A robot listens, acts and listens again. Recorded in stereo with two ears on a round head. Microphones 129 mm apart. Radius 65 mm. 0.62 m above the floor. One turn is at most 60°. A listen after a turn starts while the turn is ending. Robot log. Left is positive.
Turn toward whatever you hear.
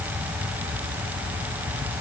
cmd idle
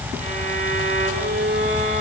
note: The violin: about 55° right or 125° right.
cmd yaw -55
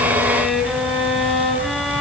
end: Found it: a violin, straight ahead.